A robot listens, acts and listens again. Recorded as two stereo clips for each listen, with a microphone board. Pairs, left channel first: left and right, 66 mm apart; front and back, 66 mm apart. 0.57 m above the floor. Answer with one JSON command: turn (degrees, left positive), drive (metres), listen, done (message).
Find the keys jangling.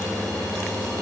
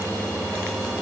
{"listen": true}
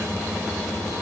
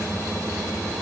{"listen": true}
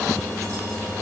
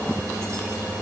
{"done": "I can't make out keys jangling."}